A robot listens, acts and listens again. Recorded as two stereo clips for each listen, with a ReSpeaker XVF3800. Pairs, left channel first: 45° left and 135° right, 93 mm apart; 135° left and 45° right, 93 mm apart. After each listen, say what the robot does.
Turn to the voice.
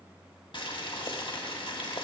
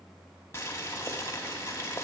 Keep listening.
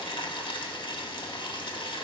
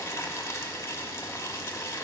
Keep listening.
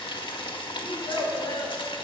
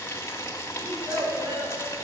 Found it: a child speaking, straight ahead, 1 to 2 m away.